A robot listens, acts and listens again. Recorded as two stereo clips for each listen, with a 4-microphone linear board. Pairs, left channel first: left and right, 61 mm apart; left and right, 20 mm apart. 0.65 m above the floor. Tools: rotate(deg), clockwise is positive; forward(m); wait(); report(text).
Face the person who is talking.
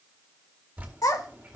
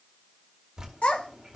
rotate(-90)
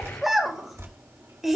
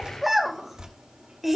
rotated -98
report("Found it: a child speaking, straight ahead.")